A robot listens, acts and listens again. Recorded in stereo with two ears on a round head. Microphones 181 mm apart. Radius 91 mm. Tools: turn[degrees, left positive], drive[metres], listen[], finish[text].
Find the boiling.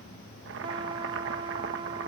Thought: The boiling: about 65° right or 115° right.
Action: turn[-65]
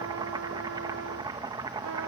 Thought: So it is at 25° right.
Action: turn[-25]
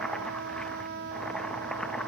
Action: finish[Found it: boiling, straight ahead.]